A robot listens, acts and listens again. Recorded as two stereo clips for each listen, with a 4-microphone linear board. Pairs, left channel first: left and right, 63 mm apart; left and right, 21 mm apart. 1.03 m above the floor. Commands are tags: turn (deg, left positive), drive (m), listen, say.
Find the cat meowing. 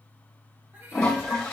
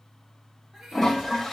<turn deg="-30"/>
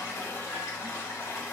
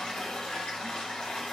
<listen/>
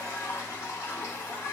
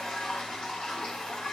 <listen/>
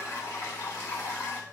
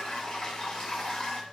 <say>I heard a cat meowing, but can't make it out now. It was about straight ahead or 120° right.</say>